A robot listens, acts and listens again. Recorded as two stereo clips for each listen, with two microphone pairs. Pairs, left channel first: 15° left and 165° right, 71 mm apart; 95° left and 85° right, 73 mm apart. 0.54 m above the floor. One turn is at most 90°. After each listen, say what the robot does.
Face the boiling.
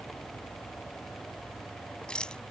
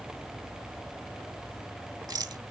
Keep listening.
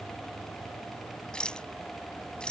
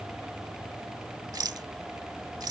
Keep listening.
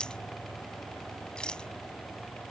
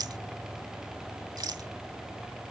I can't make out boiling to turn to.